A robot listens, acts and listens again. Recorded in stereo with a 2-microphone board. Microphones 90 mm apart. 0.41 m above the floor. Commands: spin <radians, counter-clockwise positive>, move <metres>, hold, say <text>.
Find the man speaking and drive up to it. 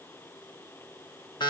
hold
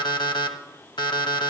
hold
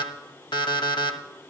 say I can't make out a man speaking to turn to.